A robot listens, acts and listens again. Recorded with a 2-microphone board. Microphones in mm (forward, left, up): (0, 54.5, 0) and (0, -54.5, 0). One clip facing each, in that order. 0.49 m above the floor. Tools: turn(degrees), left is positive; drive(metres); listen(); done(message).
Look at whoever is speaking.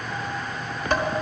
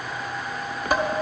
listen()
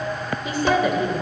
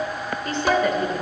turn(degrees=30)
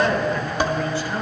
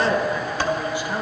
turn(degrees=-20)
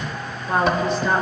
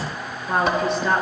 done("Facing the woman speaking.")